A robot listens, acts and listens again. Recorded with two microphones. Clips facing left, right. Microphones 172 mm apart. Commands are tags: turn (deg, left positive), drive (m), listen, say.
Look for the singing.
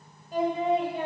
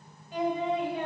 <turn deg="40"/>
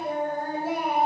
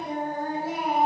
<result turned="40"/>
<turn deg="90"/>
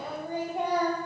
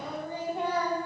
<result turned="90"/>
<turn deg="15"/>
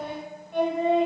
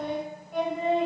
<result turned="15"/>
<say>Found it: singing, straight ahead, 1 to 2 m away.</say>